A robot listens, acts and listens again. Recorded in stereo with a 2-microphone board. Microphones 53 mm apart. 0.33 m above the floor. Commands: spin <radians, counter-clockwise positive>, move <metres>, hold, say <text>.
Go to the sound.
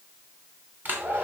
spin -0.61
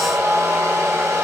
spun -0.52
spin -1.92
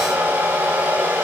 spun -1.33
spin -0.61
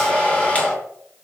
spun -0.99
spin 0.44
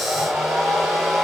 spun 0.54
move 1.0
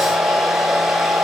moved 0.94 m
move 1.0
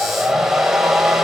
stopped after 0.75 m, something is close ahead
spin -0.17
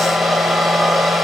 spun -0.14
say I am next to the hair dryer.